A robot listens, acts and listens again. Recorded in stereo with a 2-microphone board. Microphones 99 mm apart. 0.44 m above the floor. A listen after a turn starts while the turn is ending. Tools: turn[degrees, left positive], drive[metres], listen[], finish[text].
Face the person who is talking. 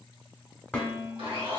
Action: listen[]
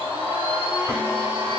Action: listen[]
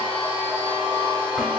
Action: finish[I can't make out anyone speaking, only dishes clattering and a blender.]